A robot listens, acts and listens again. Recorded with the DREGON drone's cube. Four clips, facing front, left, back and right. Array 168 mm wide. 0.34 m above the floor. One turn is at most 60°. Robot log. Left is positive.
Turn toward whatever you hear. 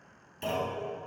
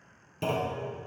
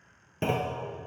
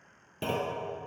note: The clunk: 165° right.
cmd yaw -60
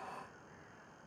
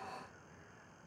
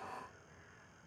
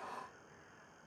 note: Nothing new. It was at 105° right.
cmd yaw -60
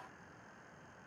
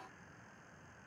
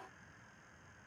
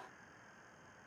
note: Nothing new. It was at 45° right.
cmd yaw -45
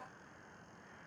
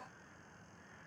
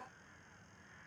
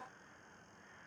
end: I heard a clunk from this way, but can't make it out now.